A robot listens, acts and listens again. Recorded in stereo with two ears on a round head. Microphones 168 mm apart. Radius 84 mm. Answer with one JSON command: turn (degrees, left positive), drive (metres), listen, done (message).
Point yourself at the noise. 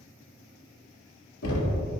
{"turn": 90}
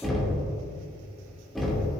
{"done": "Facing the knocking, 2 to 4 m away."}